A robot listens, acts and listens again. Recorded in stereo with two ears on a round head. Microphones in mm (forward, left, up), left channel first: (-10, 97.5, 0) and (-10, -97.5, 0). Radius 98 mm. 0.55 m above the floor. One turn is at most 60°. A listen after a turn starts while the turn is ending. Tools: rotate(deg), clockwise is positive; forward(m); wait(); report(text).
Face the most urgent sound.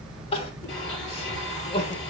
rotate(-25)
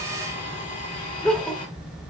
report("Facing the crying, 1 to 2 m away.")